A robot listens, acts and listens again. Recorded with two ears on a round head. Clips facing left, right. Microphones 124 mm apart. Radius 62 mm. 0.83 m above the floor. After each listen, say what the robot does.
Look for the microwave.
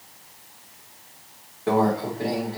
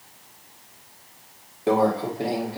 Turn 25° right.
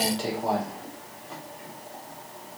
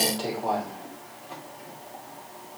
Keep listening.
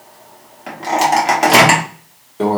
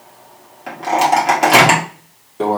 Facing the microwave, 1 to 2 m away.